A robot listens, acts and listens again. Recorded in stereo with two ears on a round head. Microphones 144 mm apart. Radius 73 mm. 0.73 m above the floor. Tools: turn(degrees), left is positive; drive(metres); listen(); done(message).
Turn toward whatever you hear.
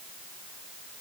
listen()
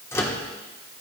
turn(degrees=15)
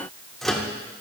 done("Found it: a microwave, straight ahead, 1 to 2 m away.")